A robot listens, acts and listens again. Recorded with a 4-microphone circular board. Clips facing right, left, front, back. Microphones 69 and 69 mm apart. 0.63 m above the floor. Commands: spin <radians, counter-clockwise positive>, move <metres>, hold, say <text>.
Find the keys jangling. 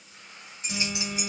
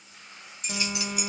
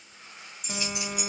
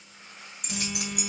spin -2.62
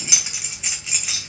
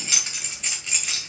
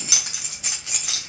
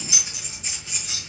say Facing the keys jangling, 2 to 4 m away.